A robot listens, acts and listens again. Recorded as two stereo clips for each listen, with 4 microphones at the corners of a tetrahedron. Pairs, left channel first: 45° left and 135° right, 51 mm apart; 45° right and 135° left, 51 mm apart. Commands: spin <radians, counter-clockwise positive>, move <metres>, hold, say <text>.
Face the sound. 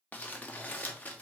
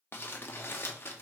spin -0.17
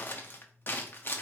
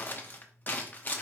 say Found it: crumpling, straight ahead, under 1 m away.